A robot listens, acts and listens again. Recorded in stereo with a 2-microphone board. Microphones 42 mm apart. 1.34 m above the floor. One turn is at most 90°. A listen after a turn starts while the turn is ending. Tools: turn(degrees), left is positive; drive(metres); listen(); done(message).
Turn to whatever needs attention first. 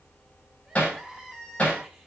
turn(degrees=-30)
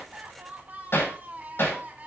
turn(degrees=-90)
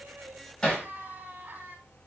turn(degrees=-40)
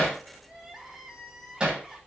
done("Facing the crying.")